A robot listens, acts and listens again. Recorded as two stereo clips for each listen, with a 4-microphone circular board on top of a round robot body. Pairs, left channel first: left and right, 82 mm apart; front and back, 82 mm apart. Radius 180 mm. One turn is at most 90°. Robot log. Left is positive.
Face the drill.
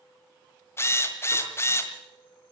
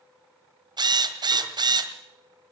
note: The drill: 150° left.
cmd yaw +90
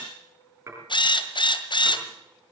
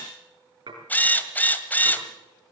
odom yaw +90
note: The drill is now 70° left.
cmd yaw +70
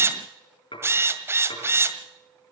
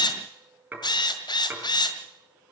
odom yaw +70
note: The drill is now 30° right.
cmd yaw -30
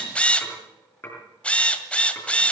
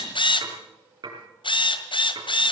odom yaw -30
note: The drill is now 15° left.
cmd yaw +15
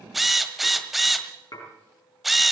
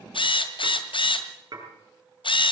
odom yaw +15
end: Facing the drill.